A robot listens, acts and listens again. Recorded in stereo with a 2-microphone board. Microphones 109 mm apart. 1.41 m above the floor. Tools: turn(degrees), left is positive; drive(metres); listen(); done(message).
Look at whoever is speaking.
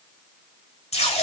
listen()
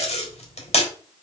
listen()
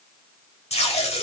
done("I can't make out anyone speaking to turn to.")